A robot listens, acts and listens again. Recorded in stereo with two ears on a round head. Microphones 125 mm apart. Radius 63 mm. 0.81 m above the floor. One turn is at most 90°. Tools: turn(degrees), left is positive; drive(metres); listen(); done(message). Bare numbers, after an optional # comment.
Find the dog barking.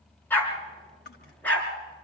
turn(30)
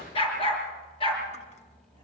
# So it is at 140° left.
turn(90)
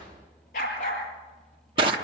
# The dog barking is now 60° left.
turn(60)
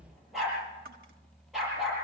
done("Found it: a dog barking, straight ahead, over 4 m away.")